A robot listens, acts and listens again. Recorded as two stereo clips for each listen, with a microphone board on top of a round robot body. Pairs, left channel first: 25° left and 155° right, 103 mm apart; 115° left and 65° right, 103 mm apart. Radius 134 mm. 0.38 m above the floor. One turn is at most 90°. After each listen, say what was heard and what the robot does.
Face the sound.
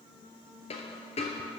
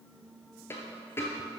The dropped coin: 45° left. Turn 45° left.
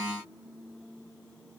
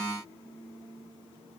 Facing where the dropped coin came from. I can't hear it now.